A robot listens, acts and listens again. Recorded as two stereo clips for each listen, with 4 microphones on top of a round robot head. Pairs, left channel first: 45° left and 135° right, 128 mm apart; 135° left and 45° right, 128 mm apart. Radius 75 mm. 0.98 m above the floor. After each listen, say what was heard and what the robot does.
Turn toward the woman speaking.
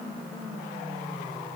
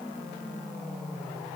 Keep listening.
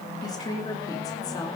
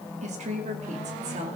The woman speaking: 15° right. Turn 15° right.
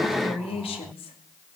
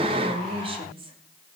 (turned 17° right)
Found it: a woman speaking, straight ahead, 2 to 4 m away.